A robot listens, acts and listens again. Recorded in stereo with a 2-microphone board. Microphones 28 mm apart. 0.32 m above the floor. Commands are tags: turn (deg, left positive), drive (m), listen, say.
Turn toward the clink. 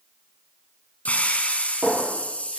<turn deg="-45"/>
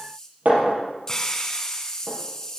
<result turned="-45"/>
<turn deg="-90"/>
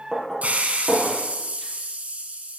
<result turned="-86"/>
<say>Facing the clink.</say>